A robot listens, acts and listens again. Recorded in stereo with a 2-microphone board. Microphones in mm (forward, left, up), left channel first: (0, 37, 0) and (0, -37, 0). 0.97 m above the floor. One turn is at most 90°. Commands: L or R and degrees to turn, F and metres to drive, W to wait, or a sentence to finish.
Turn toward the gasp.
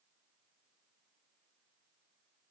W
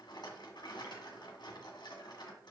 W
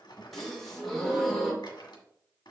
L30
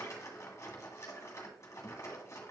W
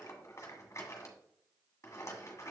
I heard a gasp, but can't make it out now. It was about 30° right or 150° left.